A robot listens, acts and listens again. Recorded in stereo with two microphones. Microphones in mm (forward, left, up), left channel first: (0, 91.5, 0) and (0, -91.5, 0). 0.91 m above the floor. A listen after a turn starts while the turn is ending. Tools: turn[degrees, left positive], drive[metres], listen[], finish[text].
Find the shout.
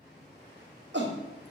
Thought: The shout: about 75° right or 105° right.
Action: turn[-75]
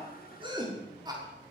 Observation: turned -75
Thought: So it is at 25° right.
Action: turn[-25]
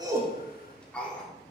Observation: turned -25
Action: finish[Found it: a shout, straight ahead.]